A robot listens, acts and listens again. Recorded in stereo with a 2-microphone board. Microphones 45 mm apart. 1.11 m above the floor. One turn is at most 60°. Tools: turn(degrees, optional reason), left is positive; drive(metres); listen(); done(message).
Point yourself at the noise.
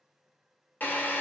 turn(degrees=40, reason="The drill: about 40° left or 140° left.")
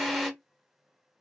done("Facing the drill, 1 to 2 m away.")